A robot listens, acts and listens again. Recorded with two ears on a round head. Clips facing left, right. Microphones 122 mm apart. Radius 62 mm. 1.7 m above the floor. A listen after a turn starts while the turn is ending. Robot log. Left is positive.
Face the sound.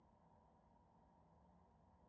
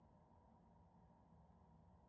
cmd idle
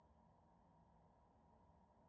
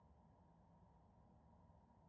cmd idle
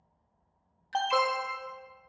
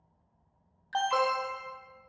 cmd yaw +30
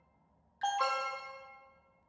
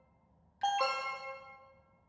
note: So it is at 15° right.
cmd yaw -15
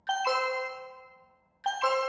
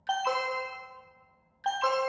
end: Found it: an alarm, straight ahead.